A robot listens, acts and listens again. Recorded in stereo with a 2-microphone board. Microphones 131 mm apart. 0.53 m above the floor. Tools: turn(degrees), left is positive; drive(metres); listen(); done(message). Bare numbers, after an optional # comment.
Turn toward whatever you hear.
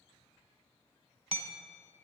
# The hammering: about 55° right or 125° right.
turn(-55)
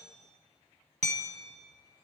# So it is at 70° right.
turn(-70)
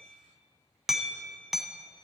done("Facing the hammering, 1 to 2 m away.")